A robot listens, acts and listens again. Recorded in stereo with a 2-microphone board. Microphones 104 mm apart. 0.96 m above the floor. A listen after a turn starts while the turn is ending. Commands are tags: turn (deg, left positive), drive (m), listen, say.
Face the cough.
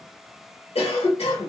<turn deg="70"/>
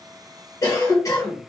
<turn deg="35"/>
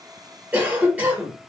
<turn deg="-15"/>
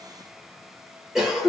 <say>Found it: a cough, straight ahead.</say>